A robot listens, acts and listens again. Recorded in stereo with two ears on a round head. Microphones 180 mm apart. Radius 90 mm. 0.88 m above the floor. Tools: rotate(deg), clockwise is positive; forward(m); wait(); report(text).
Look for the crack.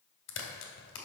rotate(-65)
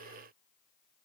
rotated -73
wait()
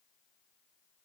report("I heard a crack, but can't make it out now. It was about 5° right or 40° left.")